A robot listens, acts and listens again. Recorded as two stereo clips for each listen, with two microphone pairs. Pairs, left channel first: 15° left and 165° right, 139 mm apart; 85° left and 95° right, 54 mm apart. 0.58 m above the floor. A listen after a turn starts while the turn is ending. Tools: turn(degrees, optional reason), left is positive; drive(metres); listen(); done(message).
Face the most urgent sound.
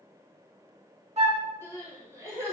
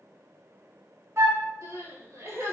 turn(degrees=-95, reason="The crying: 95° right.")
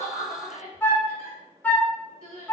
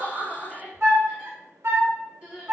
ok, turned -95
turn(degrees=-25, reason="The crying is now 25° right.")
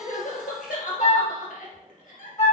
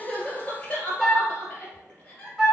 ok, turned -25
turn(degrees=20, reason="The crying is now 20° left.")
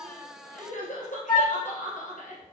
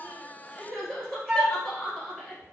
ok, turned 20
done("Found it: crying, straight ahead, 1 to 2 m away.")